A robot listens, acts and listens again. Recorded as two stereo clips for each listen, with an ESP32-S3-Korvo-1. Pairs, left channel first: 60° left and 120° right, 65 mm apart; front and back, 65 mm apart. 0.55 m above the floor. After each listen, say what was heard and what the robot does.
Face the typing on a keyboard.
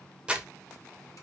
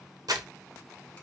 Keep listening.
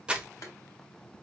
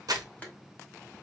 Keep listening.
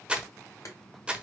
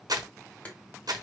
I can't make out typing on a keyboard to turn to.